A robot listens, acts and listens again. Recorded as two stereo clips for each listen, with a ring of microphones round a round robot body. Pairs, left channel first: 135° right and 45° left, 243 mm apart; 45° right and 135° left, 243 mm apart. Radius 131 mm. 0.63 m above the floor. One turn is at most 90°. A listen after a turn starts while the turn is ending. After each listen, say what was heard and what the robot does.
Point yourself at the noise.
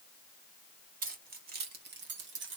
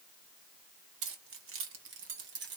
The keys jangling: 90° left. Turn 90° left.
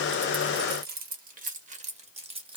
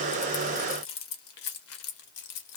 The keys jangling is now 25° right. Turn 25° right.
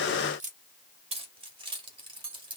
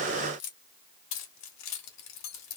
The keys jangling is now 25° right. Turn 25° right.
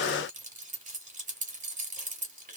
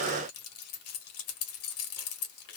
The keys jangling is now 15° right. Turn 15° right.
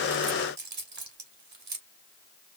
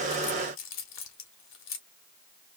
Found it: keys jangling, straight ahead.